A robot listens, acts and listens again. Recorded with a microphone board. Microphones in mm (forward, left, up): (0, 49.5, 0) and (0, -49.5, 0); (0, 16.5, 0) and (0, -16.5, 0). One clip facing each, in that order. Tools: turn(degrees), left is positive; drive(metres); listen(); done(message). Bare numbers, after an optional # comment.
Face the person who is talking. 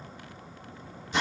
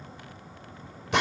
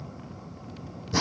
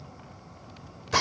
listen()
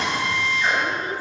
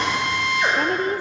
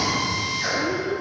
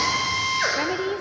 # The woman speaking: about 50° right or 130° right.
turn(-50)
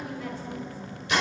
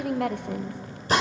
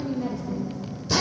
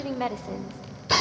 # So it is at 75° right.
turn(-75)
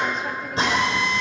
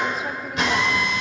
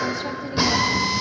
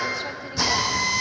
listen()
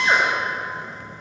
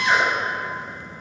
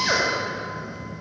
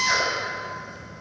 listen()
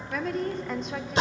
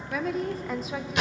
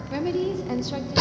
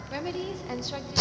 done("Found it: a woman speaking, straight ahead.")